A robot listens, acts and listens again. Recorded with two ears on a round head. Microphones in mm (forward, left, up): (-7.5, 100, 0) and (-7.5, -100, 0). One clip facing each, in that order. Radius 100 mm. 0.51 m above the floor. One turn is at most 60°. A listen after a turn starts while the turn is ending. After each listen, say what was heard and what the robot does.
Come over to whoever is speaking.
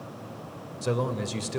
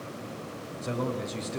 The man speaking: about 65° left or 115° left. Turn 60° left.
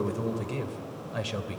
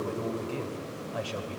So it is at 25° left. Turn 25° left.
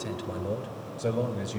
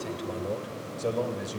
Drive 1.0 m forward.
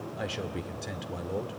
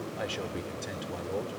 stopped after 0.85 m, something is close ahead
Arrived at the man speaking, straight ahead.